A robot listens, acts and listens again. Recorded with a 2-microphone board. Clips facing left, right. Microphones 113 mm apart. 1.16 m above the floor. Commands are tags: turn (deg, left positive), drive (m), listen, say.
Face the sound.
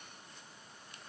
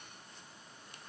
<listen/>
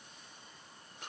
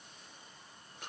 <listen/>
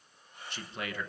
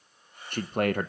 <turn deg="-55"/>
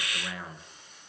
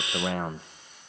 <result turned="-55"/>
<turn deg="-60"/>
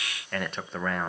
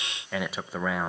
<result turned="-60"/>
<say>Found it: a man speaking, straight ahead.</say>